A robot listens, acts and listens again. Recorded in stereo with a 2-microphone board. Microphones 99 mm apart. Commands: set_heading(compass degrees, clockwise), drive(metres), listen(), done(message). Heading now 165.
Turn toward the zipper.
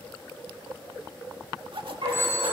set_heading(225)
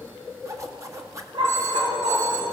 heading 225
set_heading(260)
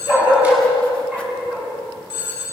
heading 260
listen()
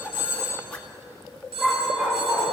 set_heading(245)
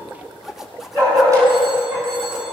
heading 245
done("Facing the zipper, 1 to 2 m away.")